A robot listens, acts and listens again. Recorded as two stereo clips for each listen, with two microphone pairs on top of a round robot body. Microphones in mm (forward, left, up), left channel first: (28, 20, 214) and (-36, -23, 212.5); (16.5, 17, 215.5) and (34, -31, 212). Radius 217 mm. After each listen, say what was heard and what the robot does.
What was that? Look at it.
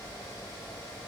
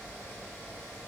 Keep listening.
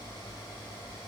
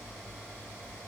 Keep listening.
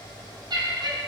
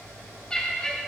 The laughter: 175° right. Turn 175° right.
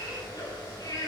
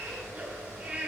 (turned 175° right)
The laughter is now 10° right. Turn 10° right.
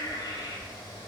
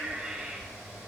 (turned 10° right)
Found it: laughter, straight ahead.